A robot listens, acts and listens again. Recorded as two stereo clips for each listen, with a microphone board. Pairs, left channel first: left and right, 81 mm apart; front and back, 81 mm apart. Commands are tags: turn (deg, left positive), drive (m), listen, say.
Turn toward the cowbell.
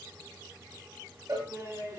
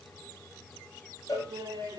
<turn deg="-45"/>
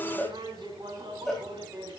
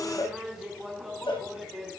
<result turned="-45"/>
<say>Facing the cowbell.</say>